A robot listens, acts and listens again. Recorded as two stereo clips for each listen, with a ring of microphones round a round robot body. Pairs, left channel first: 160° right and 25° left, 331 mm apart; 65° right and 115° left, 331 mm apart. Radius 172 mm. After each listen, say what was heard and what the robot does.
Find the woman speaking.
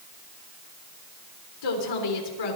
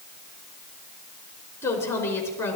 The woman speaking: 150° right. Turn 150° right.
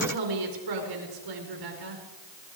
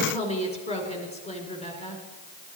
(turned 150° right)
Facing the woman speaking, over 4 m away.